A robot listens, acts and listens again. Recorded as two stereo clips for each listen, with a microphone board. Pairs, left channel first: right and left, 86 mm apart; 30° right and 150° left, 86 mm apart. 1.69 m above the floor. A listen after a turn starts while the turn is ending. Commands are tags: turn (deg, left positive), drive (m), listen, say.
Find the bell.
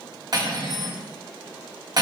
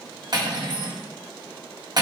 <listen/>
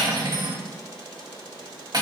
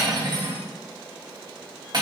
<listen/>
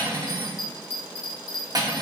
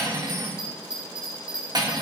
<turn deg="-130"/>
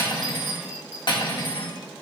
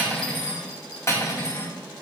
<listen/>
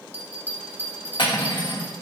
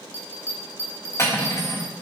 <turn deg="25"/>
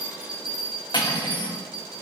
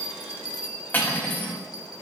<turn deg="10"/>
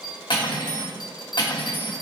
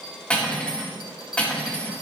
<say>Facing the bell, 1 to 2 m away.</say>